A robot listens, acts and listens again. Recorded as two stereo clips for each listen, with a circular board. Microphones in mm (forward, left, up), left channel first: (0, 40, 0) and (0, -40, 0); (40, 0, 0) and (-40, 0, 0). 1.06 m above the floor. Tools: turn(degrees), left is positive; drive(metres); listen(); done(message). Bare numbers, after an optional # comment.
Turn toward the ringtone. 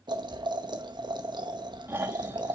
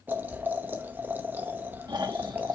listen()
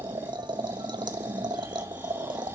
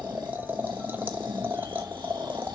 listen()
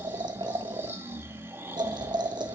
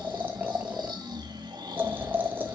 done("I can't make out a ringtone to turn to.")